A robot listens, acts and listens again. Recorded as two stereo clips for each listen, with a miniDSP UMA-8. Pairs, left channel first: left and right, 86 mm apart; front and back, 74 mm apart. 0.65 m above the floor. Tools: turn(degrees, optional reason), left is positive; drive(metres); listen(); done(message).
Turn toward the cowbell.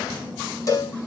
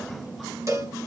turn(degrees=140, reason="The cowbell: 140° left.")
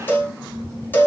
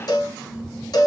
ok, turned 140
turn(degrees=25, reason="The cowbell is now 25° left.")
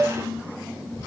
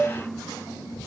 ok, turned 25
done("Found it: a cowbell, straight ahead.")